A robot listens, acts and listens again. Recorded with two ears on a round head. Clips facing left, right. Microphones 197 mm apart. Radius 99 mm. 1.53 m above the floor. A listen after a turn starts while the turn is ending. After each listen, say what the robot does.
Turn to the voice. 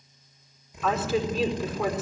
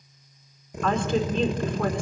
Turn 30° left.
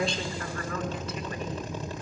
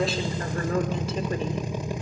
Keep listening.
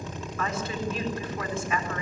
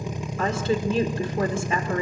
Turn 25° right.
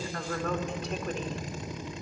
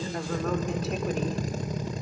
Facing the woman speaking.